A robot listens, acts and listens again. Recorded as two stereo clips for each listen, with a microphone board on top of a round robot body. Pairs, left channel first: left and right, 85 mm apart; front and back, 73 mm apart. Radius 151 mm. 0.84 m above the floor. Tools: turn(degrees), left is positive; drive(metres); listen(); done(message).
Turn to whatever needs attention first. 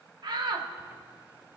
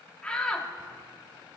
turn(degrees=-75)
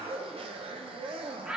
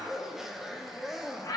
turn(degrees=-10)
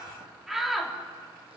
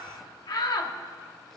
done("Facing the shout, 1 to 2 m away.")